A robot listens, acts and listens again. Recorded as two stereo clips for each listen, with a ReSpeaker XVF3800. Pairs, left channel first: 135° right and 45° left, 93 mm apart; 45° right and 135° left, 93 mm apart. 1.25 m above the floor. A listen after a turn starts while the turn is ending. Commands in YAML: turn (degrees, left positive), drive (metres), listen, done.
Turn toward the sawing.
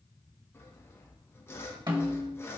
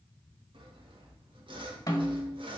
turn: 160
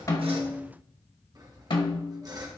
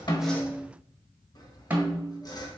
done: "Facing the sawing, 1 to 2 m away."